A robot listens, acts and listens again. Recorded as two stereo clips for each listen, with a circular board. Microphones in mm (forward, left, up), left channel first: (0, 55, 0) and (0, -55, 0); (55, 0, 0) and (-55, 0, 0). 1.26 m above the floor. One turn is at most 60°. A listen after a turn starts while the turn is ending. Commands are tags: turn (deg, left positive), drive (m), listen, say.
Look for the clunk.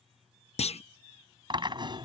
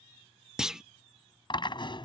<turn deg="60"/>
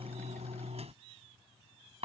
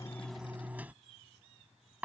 <turn deg="35"/>
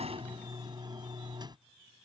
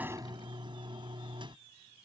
<say>Facing where the clunk came from. I can't hear it now.</say>